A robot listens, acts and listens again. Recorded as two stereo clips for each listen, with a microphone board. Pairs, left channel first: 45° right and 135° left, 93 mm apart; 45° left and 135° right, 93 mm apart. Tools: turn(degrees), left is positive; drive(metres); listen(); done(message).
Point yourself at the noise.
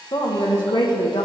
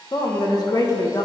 turn(degrees=-10)
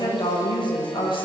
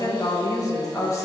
turn(degrees=-15)
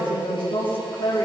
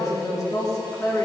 turn(degrees=-15)
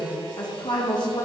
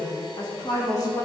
done("Facing the woman speaking.")